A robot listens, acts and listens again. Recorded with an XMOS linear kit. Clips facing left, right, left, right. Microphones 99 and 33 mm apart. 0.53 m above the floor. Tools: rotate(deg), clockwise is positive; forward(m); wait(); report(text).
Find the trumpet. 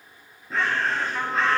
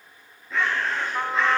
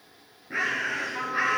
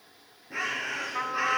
rotate(30)
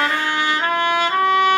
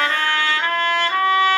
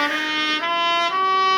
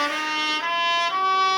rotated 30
rotate(-15)
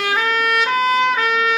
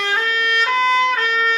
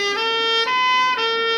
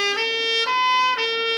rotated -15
report("Facing the trumpet, 2 to 4 m away.")